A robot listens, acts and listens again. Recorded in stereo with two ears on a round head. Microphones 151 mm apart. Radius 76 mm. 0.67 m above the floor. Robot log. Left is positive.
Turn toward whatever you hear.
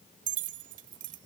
cmd yaw -90
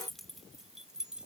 end: Facing the keys jangling.